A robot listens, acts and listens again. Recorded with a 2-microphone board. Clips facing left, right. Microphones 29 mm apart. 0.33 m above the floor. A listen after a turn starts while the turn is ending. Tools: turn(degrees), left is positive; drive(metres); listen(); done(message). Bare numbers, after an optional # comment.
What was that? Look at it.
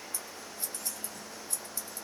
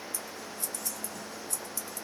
# The scissors: about 30° left or 150° left.
turn(30)
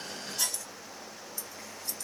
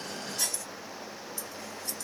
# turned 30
done("Facing the scissors.")